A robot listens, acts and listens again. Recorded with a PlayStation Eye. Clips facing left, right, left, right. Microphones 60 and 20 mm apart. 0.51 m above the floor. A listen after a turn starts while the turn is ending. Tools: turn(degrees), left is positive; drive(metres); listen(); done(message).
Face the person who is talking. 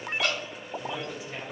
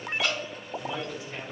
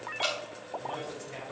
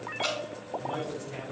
turn(degrees=20)
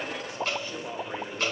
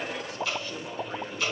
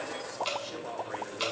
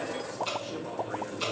turn(degrees=135)
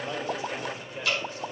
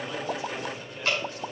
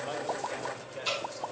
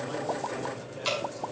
turn(degrees=25)
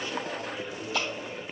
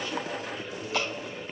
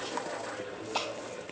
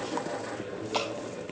listen()
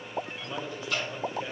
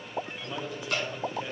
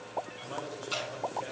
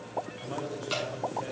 turn(degrees=-10)
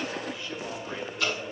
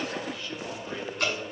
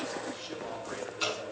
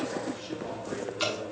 done("Found it: a man speaking, straight ahead, 2 to 4 m away.")